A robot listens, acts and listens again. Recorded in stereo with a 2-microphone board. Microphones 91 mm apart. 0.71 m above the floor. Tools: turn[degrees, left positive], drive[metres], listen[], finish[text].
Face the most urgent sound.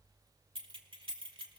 Action: listen[]
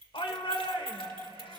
Thought: The shout: about 70° left or 110° left.
Action: turn[70]
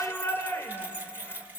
Thought: So it is at 25° left.
Action: turn[25]
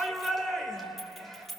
Action: finish[Facing the shout.]